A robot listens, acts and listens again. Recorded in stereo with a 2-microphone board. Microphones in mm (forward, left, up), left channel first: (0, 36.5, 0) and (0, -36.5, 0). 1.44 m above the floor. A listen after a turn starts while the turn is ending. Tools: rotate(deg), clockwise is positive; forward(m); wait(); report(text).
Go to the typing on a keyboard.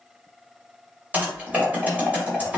rotate(20)
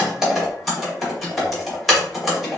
forward(1.0)
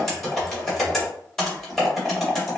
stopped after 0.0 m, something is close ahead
report("Something is in my way. I am facing the typing on a keyboard but have not reached it.")